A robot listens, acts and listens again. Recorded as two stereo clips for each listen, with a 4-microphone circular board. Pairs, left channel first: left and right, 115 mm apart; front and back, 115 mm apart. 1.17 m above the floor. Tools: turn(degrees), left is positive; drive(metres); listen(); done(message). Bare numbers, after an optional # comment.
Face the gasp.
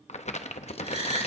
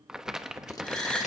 # The gasp: 80° right.
turn(-80)
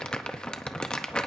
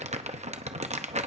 done("I heard a gasp from this way, but can't make it out now.")